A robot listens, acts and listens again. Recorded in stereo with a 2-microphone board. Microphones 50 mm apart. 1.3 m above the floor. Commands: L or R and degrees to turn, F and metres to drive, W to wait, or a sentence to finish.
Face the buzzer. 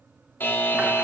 L40
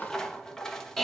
L10
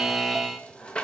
Facing the buzzer.